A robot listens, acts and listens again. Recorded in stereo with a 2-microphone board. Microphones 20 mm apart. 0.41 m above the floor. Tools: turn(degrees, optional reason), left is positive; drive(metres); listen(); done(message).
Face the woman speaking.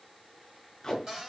listen()
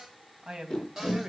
turn(degrees=-50, reason="The woman speaking: about 50° right or 130° right.")
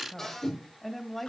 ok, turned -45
turn(degrees=20, reason="So it is at 20° left.")
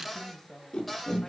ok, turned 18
turn(degrees=20, reason="The woman speaking is now 20° left.")
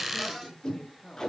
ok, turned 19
turn(degrees=25, reason="The woman speaking is now 25° left.")
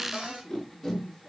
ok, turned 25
done("Found it: a woman speaking, straight ahead, 2 to 4 m away.")